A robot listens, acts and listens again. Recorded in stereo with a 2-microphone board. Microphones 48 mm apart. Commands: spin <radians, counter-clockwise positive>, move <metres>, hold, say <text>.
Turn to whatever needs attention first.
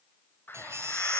spin -1.13
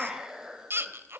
spin -0.87
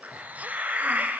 hold
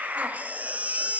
spin -0.52
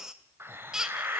spin -0.17
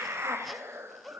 hold
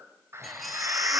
hold
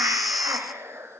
say Found it: a baby crying, straight ahead, under 1 m away.